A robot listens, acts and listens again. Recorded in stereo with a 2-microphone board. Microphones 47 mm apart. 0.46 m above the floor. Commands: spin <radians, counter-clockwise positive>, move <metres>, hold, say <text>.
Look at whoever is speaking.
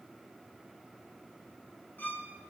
hold
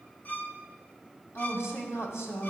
spin 1.13
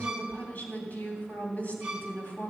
spin 0.70
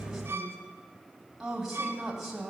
say Found it: a woman speaking, straight ahead.